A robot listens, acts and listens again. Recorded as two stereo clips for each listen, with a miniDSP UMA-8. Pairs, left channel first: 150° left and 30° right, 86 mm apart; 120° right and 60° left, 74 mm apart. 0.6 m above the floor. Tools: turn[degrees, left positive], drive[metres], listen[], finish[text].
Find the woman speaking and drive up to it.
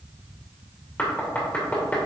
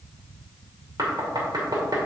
Action: listen[]
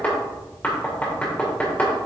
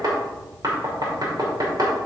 Action: listen[]
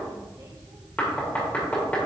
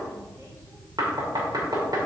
Action: finish[I can't make out a woman speaking, only knocking.]